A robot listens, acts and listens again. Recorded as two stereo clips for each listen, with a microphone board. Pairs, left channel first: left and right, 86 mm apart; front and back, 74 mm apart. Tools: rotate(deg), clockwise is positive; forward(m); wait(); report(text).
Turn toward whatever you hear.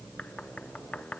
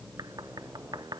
rotate(-165)
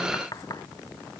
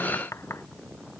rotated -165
rotate(-50)
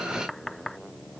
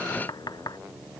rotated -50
report("Facing the knocking.")